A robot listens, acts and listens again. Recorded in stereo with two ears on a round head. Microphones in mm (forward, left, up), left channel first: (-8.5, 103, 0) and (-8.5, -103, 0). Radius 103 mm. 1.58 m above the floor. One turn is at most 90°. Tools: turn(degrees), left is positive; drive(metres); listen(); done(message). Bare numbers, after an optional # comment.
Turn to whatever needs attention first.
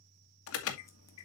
# The alarm: about 70° left or 110° left.
turn(70)
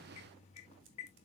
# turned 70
# So it is at 30° left.
turn(30)
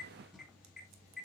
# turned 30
done("Facing the alarm.")